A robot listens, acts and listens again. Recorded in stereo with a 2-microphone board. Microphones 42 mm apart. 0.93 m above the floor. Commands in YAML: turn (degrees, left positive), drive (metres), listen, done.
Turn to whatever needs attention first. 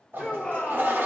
turn: 30
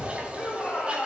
turn: 135
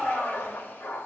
turn: -10
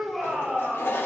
done: "Found it: a shout, straight ahead."